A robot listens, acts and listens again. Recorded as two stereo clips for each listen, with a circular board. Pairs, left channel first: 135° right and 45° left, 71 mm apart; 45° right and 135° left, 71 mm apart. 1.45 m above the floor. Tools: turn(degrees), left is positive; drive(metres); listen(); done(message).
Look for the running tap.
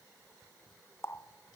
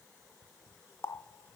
turn(degrees=-90)
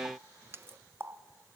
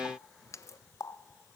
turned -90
done("Facing the running tap.")